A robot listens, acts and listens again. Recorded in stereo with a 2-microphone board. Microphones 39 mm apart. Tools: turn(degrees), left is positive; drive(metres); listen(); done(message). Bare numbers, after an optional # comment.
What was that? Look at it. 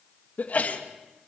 # The sneeze: about 45° left or 135° left.
turn(45)
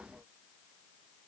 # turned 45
listen()
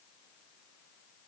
done("I heard a sneeze, but can't make it out now. It was about straight ahead or 90° left.")